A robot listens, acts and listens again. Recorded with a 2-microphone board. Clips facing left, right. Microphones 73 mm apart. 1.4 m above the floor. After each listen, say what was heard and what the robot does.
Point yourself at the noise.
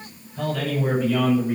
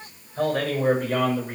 The man speaking: about 60° right or 120° right. Turn 60° right.
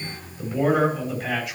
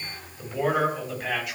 Facing the man speaking, over 4 m away.